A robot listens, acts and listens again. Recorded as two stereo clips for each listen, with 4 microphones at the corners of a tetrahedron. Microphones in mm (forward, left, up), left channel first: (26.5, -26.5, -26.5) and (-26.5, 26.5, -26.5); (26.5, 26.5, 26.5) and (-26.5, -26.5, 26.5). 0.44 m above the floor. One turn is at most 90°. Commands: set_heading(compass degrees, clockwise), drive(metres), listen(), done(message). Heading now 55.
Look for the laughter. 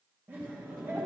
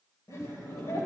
set_heading(340)
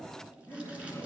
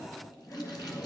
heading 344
done("Facing the laughter.")